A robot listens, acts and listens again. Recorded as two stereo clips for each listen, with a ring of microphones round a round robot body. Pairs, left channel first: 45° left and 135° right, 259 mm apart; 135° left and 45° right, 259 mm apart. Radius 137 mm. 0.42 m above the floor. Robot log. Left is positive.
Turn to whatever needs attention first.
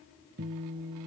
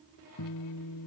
cmd idle
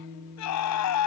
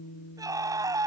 note: The scream: 30° left.
cmd yaw +30
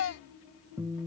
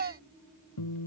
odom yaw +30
end: Found it: a scream, straight ahead.